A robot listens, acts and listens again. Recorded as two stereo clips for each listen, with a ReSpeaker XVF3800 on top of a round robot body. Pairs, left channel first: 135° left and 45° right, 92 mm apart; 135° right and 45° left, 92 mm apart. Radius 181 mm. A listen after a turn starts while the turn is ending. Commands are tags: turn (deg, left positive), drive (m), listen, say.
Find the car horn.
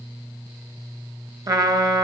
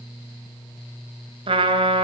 <listen/>
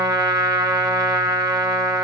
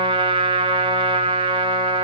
<listen/>
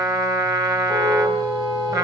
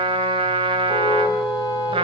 <turn deg="-90"/>
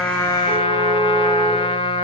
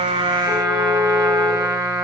<listen/>
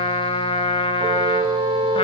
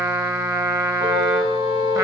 <say>Found it: a car horn, straight ahead, over 4 m away.</say>